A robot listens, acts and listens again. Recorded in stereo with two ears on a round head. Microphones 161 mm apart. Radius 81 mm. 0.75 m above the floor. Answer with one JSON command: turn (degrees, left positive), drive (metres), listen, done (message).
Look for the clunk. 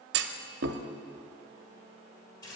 {"turn": -65}
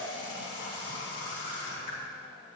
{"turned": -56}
{"listen": true}
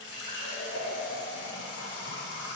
{"done": "I heard a clunk, but can't make it out now. It was about 10° right or 60° right."}